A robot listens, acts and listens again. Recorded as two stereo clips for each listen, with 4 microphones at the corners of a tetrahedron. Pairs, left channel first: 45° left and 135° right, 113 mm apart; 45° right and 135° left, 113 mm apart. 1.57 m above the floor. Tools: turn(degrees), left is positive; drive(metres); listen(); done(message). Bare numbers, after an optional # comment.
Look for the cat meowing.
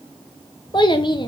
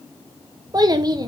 listen()
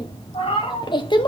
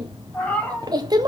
# The cat meowing: 35° left.
turn(35)
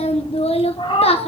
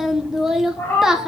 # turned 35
# The cat meowing is now 25° left.
turn(25)
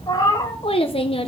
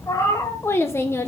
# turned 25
# The cat meowing is now 10° left.
turn(10)
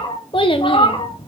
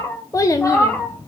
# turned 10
# The cat meowing is now 30° left.
turn(30)
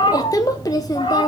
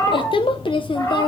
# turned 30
# The cat meowing is now 15° left.
turn(15)
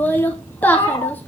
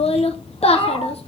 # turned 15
done("Found it: a cat meowing, straight ahead.")